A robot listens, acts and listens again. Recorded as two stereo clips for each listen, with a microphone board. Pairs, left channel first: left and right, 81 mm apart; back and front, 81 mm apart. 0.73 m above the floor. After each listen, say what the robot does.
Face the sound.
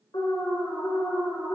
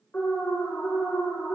Turn 110° left.
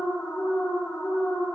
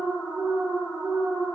Turn 35° left.
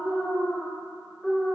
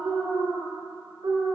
Found it: an alarm, straight ahead, 2 to 4 m away.